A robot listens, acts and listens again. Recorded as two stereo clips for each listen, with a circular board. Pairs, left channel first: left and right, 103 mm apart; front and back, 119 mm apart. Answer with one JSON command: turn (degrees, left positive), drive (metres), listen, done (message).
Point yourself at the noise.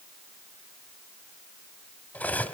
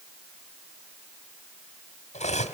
{"turn": 15}
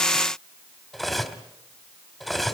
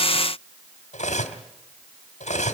{"done": "Found it: cutlery clinking, straight ahead."}